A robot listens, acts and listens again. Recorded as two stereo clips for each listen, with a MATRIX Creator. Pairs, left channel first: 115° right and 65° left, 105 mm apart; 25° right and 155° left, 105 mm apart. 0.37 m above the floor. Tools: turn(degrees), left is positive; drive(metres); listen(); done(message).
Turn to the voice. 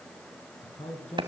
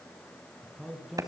turn(degrees=-115)
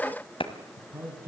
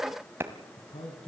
done("Facing the man speaking.")